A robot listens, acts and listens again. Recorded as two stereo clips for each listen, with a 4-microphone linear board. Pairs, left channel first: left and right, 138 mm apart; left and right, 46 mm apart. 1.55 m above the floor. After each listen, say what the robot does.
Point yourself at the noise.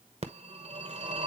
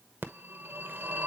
Turn 50° right.
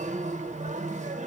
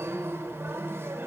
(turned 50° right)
Turn 70° right.
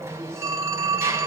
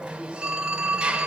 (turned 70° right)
Turn 20° right.
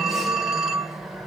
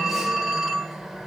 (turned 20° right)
Facing the phone ringing, 1 to 2 m away.